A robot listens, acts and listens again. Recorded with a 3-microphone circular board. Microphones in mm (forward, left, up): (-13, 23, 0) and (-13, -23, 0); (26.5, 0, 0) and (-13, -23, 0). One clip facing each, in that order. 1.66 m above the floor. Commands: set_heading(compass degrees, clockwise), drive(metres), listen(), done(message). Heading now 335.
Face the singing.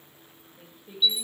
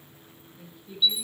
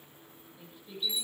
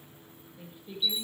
set_heading(200)
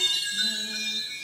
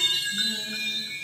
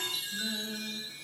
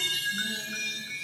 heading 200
listen()
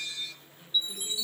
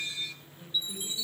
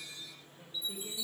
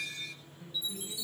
done("Found it: singing, straight ahead.")